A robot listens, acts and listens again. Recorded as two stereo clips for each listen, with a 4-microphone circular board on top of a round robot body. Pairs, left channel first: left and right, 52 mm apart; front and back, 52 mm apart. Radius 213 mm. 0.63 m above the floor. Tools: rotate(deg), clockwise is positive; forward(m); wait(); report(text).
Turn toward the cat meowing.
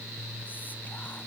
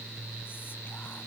wait()
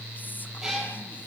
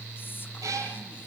rotate(175)
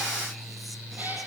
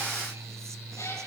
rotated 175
wait()
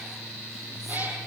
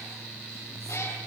wait()
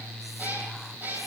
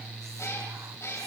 rotate(35)
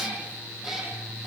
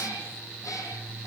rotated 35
report("Found it: a cat meowing, straight ahead, over 4 m away.")